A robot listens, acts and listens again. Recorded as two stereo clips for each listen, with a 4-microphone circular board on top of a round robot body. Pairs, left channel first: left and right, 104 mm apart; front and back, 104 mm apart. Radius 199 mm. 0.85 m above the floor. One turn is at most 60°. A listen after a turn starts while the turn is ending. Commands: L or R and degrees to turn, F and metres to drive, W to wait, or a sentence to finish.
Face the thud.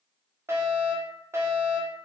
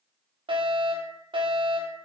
W
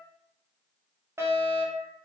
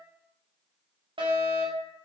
W
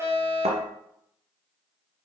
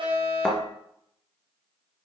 R60
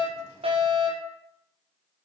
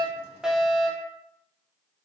R20
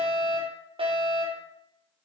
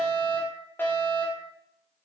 Facing where the thud came from. I can't hear it now.